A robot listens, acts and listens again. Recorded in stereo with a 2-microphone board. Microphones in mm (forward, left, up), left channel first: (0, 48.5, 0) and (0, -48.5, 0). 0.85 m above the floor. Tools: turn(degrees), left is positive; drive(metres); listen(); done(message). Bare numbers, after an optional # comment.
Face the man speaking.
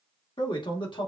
# The man speaking: about 55° left or 125° left.
turn(55)
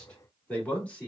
# So it is at 15° left.
turn(15)
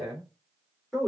done("Found it: a man speaking, straight ahead, 2 to 4 m away.")